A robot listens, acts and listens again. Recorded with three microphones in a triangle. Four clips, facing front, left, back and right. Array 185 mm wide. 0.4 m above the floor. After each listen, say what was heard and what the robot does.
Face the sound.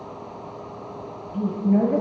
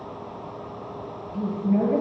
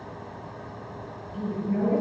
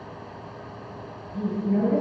Found it: a woman speaking, straight ahead, over 4 m away.